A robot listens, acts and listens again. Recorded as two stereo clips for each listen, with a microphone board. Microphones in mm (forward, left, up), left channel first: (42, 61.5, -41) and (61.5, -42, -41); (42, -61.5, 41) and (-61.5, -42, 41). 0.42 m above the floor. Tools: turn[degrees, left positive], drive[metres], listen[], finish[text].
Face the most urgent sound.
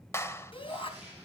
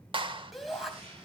Thought: The shout: 80° left.
Action: turn[80]
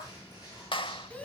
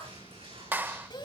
Thought: The shout is now 25° left.
Action: turn[25]
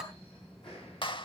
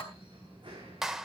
Action: finish[Facing the shout.]